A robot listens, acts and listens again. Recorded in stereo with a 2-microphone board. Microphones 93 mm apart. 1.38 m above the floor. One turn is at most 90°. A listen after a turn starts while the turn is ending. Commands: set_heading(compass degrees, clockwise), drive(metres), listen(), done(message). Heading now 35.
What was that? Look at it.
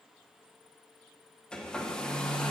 set_heading(5)
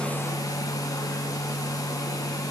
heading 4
set_heading(274)
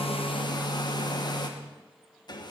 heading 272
set_heading(222)
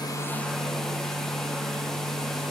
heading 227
done("Facing the hair dryer.")